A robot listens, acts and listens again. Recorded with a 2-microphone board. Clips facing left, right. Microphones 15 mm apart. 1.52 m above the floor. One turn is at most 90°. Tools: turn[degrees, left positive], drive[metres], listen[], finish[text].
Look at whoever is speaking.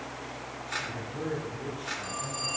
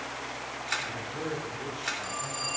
Action: turn[-90]
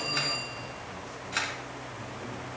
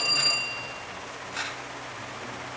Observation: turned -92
Action: listen[]
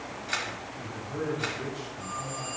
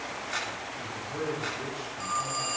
Action: finish[Facing the man speaking, over 4 m away.]